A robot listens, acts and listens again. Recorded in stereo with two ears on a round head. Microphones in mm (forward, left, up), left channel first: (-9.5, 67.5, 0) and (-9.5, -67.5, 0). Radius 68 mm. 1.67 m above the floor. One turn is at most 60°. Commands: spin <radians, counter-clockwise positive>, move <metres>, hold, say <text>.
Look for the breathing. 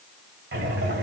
spin -1.05
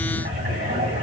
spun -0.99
spin -0.79
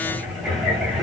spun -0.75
say Found it: breathing, straight ahead.